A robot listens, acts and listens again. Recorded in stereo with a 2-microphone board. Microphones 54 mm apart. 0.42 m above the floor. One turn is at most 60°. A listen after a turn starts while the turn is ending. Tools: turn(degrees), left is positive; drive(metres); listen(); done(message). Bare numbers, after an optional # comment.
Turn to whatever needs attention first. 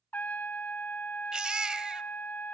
# The baby crying: about 15° right or 165° right.
turn(-15)
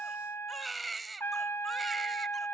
done("Found it: a baby crying, straight ahead, under 1 m away.")